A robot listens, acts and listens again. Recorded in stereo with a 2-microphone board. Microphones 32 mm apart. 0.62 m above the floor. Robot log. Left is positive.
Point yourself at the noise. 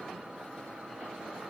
cmd idle
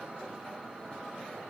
cmd idle
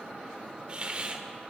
note: The hiss: about 35° right or 145° right.
cmd yaw -35
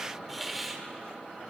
end: Facing the hiss.